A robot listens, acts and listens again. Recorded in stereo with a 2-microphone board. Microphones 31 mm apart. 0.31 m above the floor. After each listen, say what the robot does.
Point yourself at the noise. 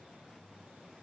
Keep listening.
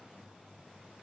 Keep listening.
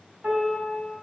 Turn 50° right.
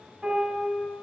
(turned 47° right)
Turn 75° right.
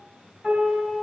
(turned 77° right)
Found it: a piano, straight ahead.